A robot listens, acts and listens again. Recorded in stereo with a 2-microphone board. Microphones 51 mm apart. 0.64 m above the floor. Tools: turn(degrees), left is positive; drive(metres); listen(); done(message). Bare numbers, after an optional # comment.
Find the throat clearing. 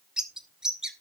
listen()
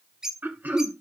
# The throat clearing: about 40° right or 140° right.
turn(-40)
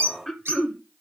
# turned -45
done("Facing the throat clearing, 1 to 2 m away.")